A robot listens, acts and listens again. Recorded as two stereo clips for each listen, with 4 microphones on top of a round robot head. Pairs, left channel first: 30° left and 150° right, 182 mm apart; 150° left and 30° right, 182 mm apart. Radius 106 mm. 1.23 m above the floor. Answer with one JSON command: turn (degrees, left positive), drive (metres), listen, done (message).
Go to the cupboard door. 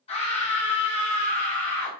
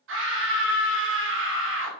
{"listen": true}
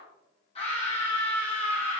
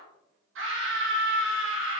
{"listen": true}
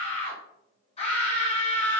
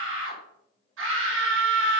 {"done": "I can't make out a cupboard door, only a scream."}